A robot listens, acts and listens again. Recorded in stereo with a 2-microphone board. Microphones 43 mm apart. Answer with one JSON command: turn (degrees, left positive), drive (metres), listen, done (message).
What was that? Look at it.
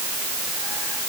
{"listen": true}
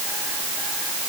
{"listen": true}
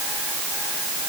{"done": "I can't make out anything."}